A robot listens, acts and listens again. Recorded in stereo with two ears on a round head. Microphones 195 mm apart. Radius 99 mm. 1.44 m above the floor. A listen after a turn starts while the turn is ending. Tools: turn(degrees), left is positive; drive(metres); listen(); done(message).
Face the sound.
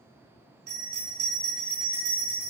turn(degrees=-65)
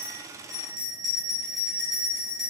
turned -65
done("Facing the bell, 1 to 2 m away.")